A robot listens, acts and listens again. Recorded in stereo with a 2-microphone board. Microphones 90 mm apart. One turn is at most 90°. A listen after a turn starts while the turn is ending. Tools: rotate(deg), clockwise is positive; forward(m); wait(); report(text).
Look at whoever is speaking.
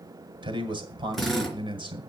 rotate(60)
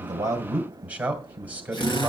rotate(20)
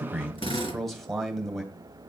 report("Found it: a man speaking, straight ahead.")